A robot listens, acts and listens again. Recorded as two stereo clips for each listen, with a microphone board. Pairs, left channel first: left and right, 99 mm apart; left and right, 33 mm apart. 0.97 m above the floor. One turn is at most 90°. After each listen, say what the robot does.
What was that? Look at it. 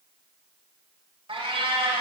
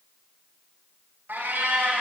Turn 70° right.
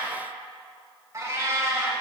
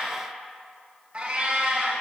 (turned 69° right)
Turn 35° right.
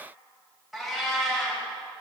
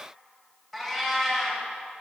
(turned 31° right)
Facing the cat meowing, 1 to 2 m away.